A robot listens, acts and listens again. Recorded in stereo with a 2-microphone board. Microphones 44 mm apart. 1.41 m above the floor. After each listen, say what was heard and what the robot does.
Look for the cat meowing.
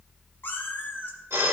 The cat meowing: about 50° left or 130° left. Turn 50° left.
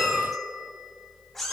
Found it: a cat meowing, straight ahead, 2 to 4 m away.